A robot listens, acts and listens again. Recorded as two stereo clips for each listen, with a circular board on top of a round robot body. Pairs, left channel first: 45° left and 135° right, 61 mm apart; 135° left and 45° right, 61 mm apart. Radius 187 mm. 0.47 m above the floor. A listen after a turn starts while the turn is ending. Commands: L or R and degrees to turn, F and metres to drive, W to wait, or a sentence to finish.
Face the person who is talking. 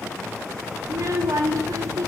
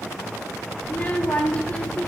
R160
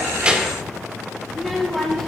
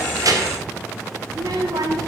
R40
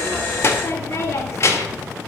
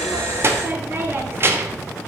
Found it: a child speaking, straight ahead.